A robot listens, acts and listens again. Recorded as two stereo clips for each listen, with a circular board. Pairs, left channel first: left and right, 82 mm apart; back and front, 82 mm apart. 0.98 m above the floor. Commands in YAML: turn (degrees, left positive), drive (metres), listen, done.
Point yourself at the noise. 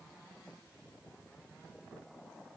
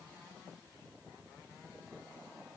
listen: true
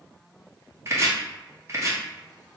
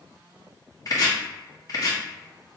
turn: -140
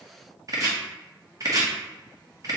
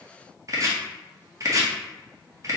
turn: -45
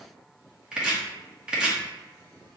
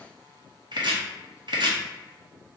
turn: -10
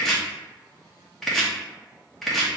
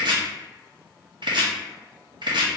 done: "Found it: chopping, straight ahead."